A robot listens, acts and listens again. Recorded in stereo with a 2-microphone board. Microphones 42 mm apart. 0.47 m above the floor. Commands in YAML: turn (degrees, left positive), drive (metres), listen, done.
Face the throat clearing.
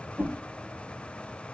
listen: true
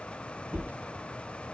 listen: true
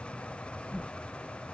done: "I can't make out throat clearing, only a whoosh."